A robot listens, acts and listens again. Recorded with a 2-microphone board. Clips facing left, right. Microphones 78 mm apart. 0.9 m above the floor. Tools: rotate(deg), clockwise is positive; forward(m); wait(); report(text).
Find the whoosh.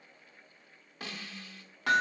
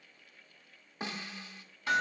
wait()
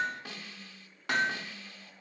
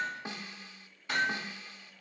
wait()
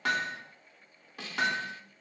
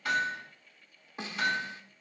report("I can't make out a whoosh to turn to.")